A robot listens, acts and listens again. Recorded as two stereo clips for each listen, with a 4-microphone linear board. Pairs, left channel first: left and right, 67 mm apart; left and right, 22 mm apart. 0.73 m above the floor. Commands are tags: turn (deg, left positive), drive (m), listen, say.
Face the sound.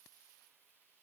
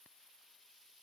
<listen/>
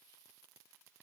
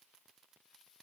<listen/>
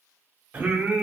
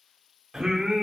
<turn deg="-20"/>
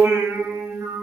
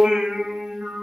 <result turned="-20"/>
<turn deg="-140"/>
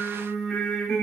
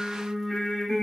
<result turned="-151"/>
<turn deg="10"/>
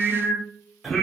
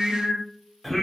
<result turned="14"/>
<say>Facing the singing.</say>